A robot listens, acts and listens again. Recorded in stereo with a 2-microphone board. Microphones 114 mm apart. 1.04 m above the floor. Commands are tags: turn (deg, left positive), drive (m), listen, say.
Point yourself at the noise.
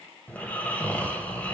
<turn deg="30"/>
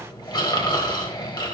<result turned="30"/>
<turn deg="135"/>
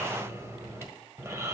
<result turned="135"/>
<turn deg="-30"/>
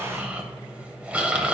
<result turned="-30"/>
<turn deg="-10"/>
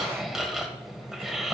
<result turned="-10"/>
<say>Found it: snoring, straight ahead, 1 to 2 m away.</say>